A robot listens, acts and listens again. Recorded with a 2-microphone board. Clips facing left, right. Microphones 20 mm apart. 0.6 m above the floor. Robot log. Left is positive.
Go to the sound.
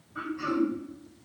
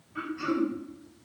note: The throat clearing: about 35° right or 145° right.
cmd yaw -35
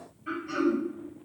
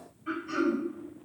cmd fwd 1.0
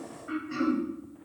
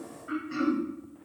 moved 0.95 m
cmd fwd 1.0
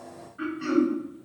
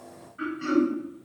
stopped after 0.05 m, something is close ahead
end: I am next to the throat clearing.